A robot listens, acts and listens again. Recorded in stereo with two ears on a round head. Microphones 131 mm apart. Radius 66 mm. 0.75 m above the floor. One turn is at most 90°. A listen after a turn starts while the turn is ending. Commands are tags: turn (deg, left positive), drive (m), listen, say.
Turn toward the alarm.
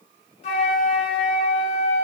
<listen/>
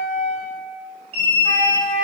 <turn deg="-45"/>
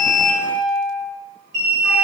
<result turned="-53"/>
<turn deg="-75"/>
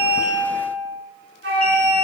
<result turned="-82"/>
<turn deg="10"/>
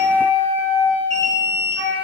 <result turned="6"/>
<say>Facing the alarm, 2 to 4 m away.</say>